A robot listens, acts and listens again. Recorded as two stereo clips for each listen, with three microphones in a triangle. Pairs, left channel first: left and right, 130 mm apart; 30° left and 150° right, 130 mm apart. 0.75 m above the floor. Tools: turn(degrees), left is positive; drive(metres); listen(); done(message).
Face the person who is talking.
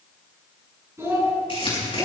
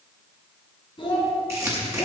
turn(degrees=-20)
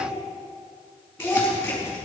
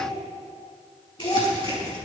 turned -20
done("Found it: a child speaking, straight ahead.")